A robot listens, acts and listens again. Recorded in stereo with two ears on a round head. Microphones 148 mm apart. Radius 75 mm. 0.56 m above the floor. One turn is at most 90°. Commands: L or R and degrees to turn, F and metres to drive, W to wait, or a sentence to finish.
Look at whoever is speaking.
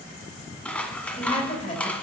L35
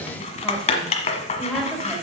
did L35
Found it: a woman speaking, straight ahead.